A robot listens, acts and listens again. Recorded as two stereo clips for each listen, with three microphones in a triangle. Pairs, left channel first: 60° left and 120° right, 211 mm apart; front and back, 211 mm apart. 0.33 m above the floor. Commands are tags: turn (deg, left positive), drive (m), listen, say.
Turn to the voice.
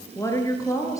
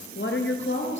<turn deg="-15"/>
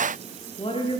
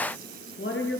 <say>Found it: a woman speaking, straight ahead, over 4 m away.</say>